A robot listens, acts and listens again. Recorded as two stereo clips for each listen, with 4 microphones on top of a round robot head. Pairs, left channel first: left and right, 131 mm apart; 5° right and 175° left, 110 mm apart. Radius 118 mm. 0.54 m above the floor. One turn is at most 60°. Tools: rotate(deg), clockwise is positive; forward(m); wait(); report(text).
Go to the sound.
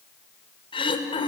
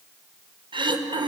rotate(-60)
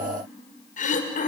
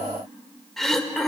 rotate(-60)
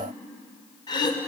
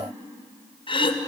rotate(-30)
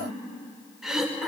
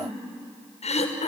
forward(1.0)
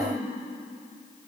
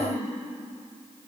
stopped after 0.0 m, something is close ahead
report("Blocked. The throat clearing is further on, straight ahead.")